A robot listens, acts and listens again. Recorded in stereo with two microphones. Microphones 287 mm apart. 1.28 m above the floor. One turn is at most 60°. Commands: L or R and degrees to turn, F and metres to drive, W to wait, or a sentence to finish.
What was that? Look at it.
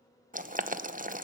R30
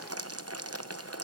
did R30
R60
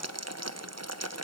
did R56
R60
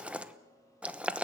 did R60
Found it: boiling, straight ahead, under 1 m away.